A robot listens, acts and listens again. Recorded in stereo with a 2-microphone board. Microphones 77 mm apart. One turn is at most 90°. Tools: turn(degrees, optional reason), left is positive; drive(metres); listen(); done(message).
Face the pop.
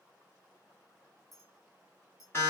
listen()
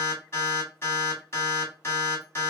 listen()
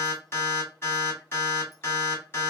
done("I can't make out a pop, only an alarm and a clink.")